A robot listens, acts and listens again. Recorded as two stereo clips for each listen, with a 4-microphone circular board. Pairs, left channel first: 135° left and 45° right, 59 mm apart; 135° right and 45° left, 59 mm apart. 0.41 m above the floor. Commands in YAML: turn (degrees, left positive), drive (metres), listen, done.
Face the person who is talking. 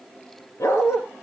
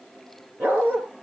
listen: true
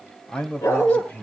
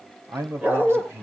turn: 80
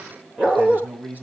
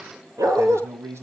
turn: 15
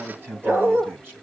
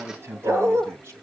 done: "Facing the man speaking, 2 to 4 m away."